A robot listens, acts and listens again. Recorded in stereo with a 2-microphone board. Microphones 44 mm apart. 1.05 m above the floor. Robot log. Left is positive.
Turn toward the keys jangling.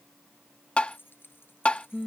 note: The keys jangling: about 55° left or 125° left.
cmd yaw +55
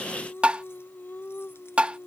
cmd idle
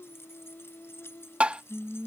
note: So it is at 75° left.
cmd yaw +75
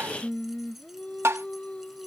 cmd idle
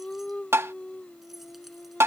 cmd idle
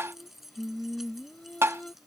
end: Found it: keys jangling, straight ahead.